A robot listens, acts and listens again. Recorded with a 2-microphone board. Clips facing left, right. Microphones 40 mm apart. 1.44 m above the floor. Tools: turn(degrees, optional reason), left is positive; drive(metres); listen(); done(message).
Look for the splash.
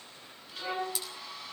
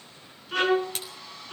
turn(degrees=-50, reason="The splash: about 50° right or 130° right.")
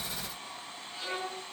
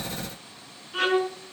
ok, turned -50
listen()
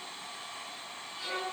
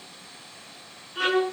done("I heard a splash, but can't make it out now. It was about straight ahead or 80° right.")